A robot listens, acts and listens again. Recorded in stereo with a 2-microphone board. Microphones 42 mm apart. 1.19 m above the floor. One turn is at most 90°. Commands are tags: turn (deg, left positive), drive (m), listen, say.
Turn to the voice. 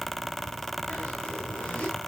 <listen/>
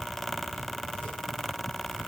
<listen/>
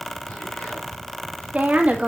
<turn deg="-35"/>
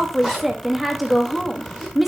<say>Facing the woman speaking, 1 to 2 m away.</say>